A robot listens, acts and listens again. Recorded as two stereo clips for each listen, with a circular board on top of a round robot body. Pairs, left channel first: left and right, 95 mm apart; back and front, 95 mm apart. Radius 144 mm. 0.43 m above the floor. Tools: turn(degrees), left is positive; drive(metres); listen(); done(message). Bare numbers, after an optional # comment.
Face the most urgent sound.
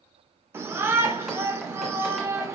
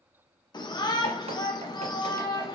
# The shout: 150° right.
turn(-150)
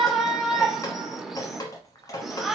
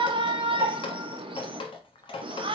done("Found it: a shout, straight ahead.")